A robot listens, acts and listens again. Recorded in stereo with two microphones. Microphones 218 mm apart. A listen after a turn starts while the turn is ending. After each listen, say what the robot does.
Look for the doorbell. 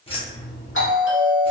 Turn 65° left.
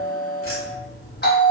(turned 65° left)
Turn 50° left.
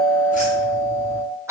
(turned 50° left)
Turn 15° right.
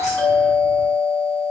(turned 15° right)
Found it: a doorbell, straight ahead.